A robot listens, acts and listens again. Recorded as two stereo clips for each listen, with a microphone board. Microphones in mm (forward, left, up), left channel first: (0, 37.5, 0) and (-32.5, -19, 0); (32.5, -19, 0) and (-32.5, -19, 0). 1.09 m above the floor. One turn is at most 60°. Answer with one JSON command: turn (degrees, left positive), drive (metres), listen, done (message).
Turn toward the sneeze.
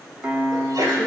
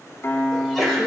{"turn": -60}
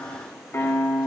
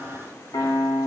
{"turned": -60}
{"turn": -35}
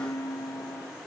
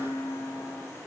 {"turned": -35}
{"done": "I heard a sneeze from this way, but can't make it out now."}